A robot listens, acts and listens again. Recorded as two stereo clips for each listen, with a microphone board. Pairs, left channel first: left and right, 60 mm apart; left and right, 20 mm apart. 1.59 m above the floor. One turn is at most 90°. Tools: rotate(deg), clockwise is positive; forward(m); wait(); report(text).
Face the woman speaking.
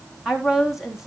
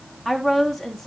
rotate(30)
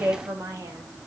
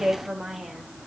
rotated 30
rotate(90)
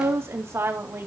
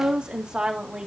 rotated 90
rotate(50)
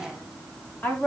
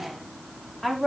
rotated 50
rotate(-25)
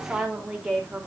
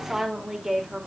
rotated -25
report("Facing the woman speaking, over 4 m away.")